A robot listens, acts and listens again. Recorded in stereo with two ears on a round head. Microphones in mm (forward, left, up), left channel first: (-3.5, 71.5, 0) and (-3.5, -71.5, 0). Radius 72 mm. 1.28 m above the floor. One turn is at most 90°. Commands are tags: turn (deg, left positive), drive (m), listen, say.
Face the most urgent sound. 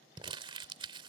<listen/>
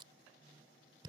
<listen/>
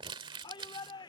<turn deg="30"/>
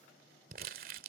<listen/>
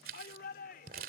<turn deg="90"/>
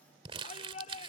<turn deg="40"/>
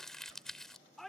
<say>Facing the shout.</say>